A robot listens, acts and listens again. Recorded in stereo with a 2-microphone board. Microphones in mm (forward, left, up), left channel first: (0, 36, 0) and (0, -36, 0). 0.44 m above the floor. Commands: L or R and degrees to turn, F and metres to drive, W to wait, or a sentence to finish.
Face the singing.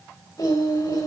L60
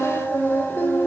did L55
L25
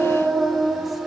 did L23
Facing the singing.